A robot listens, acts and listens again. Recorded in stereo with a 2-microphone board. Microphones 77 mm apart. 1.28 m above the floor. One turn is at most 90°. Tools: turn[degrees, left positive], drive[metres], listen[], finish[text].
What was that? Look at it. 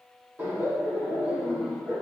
Action: turn[-30]
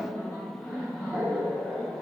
Thought: So it is at 145° right.
Action: turn[-90]
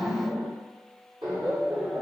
Thought: The laughter is now 75° right.
Action: turn[-75]
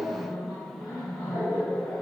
Thought: The laughter is now 10° left.
Action: turn[10]
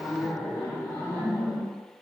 Action: finish[Found it: laughter, straight ahead.]